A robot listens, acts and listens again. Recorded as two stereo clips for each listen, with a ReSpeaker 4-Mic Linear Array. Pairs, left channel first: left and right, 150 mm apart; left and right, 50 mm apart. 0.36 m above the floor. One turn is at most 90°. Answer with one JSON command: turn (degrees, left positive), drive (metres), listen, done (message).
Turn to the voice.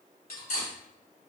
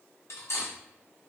{"listen": true}
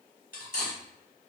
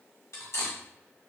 {"listen": true}
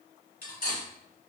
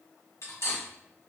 {"done": "I can't make out anyone speaking to turn to."}